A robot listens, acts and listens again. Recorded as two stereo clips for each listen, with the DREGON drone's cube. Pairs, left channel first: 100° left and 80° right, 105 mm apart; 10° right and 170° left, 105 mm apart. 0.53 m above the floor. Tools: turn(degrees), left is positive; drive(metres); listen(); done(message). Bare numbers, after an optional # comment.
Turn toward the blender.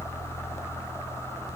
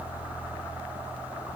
listen()
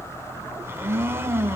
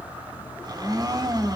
# The blender: 140° right.
turn(-140)
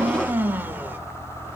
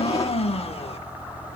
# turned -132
# The blender is now 10° right.
turn(-10)
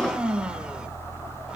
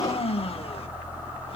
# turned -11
done("Found it: a blender, straight ahead.")